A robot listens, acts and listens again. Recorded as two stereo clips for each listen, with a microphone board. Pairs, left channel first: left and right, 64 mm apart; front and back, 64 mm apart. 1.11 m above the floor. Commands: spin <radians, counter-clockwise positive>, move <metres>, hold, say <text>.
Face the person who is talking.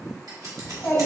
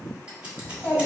spin 0.87
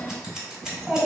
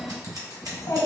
spin -0.17
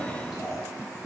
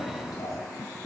say Found it: a child speaking, straight ahead.